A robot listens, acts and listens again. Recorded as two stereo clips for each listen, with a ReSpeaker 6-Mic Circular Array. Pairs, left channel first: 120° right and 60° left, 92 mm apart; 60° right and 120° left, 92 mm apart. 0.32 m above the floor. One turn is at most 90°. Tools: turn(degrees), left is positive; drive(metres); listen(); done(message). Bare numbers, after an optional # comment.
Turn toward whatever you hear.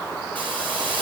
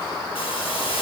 # The hiss: 45° right.
turn(-45)
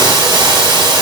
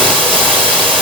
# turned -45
# The hiss is now 20° left.
turn(20)
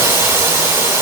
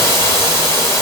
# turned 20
done("Facing the hiss, over 4 m away.")